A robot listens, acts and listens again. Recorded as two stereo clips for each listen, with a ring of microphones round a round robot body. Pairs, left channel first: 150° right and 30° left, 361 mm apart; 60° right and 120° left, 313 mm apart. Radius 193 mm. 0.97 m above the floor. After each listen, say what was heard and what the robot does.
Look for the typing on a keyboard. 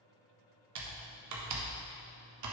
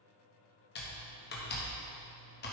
Found it: typing on a keyboard, straight ahead.